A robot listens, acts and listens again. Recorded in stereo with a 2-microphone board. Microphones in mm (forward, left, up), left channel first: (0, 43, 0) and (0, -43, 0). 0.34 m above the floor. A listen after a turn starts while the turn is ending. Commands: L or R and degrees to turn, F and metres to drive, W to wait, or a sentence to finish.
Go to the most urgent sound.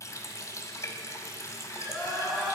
L30
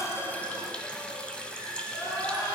L150
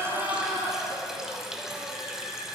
R35
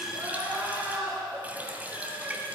R20
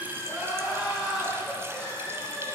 F1.0
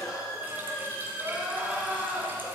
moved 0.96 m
F1.0
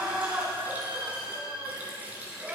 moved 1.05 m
R10
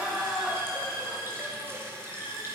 F1.0
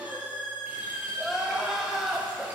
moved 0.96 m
F1.0
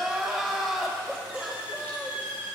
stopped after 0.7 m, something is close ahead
Arrived at the crying, straight ahead.